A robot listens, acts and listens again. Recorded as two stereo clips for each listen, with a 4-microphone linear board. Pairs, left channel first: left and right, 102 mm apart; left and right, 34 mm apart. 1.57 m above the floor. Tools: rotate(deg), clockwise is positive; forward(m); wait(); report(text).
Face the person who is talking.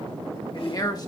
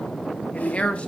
rotate(-40)
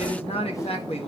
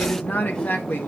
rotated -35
rotate(-105)
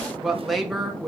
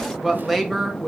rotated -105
report("Found it: a man speaking, straight ahead, 1 to 2 m away.")